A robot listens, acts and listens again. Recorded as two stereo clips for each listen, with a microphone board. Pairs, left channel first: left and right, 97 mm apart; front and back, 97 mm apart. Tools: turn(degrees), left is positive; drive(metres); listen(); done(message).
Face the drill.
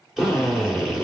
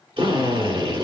turn(degrees=-175)
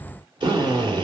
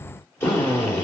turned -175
turn(degrees=-60)
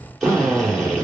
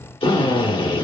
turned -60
done("Found it: a drill, straight ahead, 2 to 4 m away.")